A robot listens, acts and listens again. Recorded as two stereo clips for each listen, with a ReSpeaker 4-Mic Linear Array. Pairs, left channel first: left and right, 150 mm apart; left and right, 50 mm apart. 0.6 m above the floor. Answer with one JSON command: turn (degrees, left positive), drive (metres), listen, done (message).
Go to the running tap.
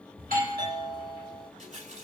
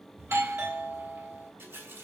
{"turn": -50}
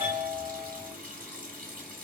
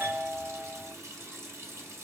{"turn": -75}
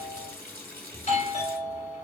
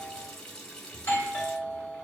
{"turn": 15}
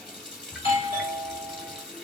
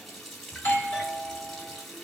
{"drive": 1.0}
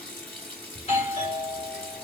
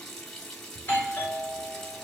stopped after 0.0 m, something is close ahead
{"turn": 10}
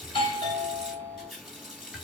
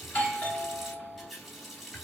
{"done": "Something is in my way. I am facing the running tap but have not reached it."}